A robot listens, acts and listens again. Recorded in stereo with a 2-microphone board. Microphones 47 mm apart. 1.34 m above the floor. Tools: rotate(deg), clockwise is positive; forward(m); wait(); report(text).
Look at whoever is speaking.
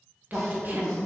rotate(40)
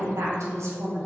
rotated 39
rotate(100)
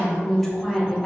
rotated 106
report("Found it: a woman speaking, straight ahead.")